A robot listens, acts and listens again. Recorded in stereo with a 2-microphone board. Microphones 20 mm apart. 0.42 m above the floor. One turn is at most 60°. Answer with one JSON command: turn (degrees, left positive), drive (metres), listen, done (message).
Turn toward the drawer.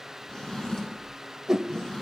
{"turn": 30}
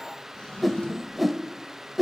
{"turn": 60}
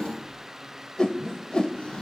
{"turn": 60}
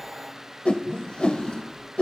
{"turn": 50}
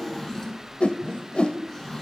{"turn": 20}
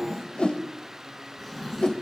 {"done": "Facing the drawer, 2 to 4 m away."}